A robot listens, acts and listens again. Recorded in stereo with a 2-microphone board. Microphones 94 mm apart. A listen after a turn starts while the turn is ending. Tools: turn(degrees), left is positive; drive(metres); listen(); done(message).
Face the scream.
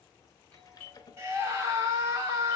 turn(degrees=-30)
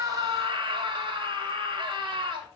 turn(degrees=-115)
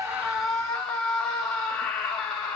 turn(degrees=10)
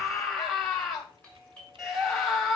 done("Found it: a scream, straight ahead.")